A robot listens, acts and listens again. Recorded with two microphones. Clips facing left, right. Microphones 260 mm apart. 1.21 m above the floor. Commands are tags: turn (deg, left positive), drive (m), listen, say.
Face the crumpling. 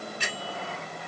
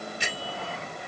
<listen/>
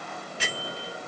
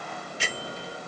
<listen/>
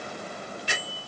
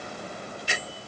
<say>I can't make out crumpling, only a bell.</say>